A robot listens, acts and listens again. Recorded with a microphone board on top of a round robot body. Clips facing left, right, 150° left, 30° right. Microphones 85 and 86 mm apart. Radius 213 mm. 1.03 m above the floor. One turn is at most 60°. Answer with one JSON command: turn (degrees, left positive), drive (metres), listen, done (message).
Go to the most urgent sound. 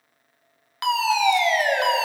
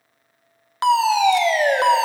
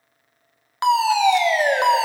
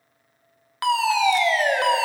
{"turn": -60}
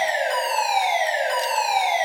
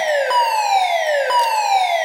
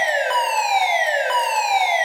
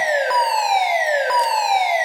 {"turn": -60}
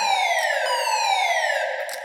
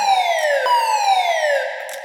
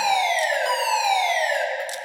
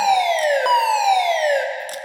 {"turn": -55}
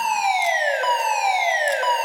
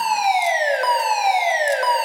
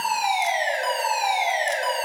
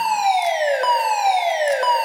{"turn": -10}
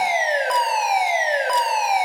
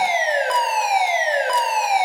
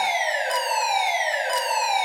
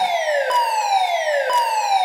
{"drive": 1.0}
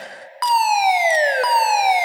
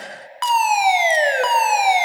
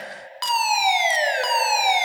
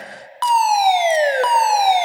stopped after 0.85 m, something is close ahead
{"turn": 10}
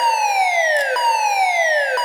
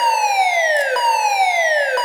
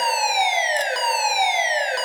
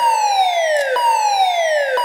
{"done": "I am next to the fire alarm."}